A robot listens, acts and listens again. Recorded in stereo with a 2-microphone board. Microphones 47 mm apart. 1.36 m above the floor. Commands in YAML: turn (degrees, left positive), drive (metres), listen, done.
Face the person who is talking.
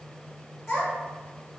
turn: 55
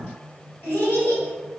turn: 65
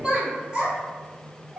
turn: -20
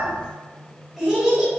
done: "Facing the child speaking, 1 to 2 m away."